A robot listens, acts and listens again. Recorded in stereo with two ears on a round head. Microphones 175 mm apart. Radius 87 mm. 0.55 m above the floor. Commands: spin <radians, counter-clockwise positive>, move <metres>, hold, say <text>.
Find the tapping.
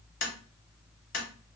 spin 1.13
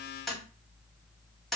say Found it: tapping, straight ahead.